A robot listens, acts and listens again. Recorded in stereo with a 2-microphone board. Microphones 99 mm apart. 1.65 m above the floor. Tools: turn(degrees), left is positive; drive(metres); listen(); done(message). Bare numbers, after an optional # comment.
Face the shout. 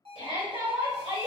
# The shout: about 55° right or 125° right.
turn(-55)
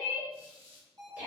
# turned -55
# So it is at 15° right.
turn(-15)
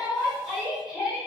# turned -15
done("Facing the shout, 1 to 2 m away.")